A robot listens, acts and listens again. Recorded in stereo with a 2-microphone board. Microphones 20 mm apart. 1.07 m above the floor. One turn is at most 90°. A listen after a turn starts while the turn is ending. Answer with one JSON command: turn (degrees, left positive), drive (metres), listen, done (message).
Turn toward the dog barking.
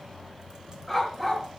{"turn": 30}
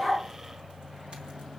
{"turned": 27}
{"listen": true}
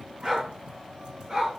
{"turn": -35}
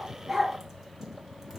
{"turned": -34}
{"listen": true}
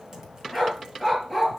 {"done": "Facing the dog barking, over 4 m away."}